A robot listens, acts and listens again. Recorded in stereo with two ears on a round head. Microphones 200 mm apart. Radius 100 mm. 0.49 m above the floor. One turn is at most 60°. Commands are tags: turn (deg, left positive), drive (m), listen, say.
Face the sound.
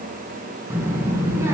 <turn deg="-30"/>
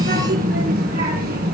<turn deg="-60"/>
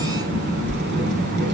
<turn deg="-50"/>
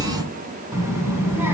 <turn deg="-10"/>
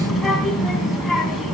<say>Facing the child speaking, 2 to 4 m away.</say>